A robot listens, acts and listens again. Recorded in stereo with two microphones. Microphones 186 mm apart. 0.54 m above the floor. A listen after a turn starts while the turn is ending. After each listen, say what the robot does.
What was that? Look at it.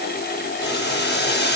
Turn 65° left.
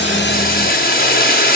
Turn 50° left.
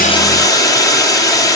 Turn 20° left.
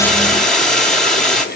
Found it: boiling, straight ahead.